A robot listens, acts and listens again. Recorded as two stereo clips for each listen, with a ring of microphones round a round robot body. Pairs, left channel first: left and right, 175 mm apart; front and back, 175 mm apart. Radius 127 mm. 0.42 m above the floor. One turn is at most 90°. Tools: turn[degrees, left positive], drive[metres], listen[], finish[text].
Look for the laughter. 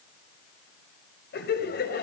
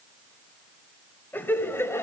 Thought: The laughter: 75° left.
Action: turn[75]
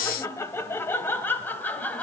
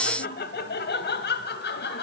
Thought: The laughter is now 10° left.
Action: turn[10]
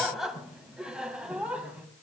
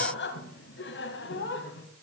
Thought: The laughter is now 10° right.
Action: turn[-10]
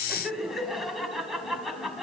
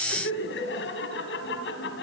Action: finish[Found it: laughter, straight ahead, 2 to 4 m away.]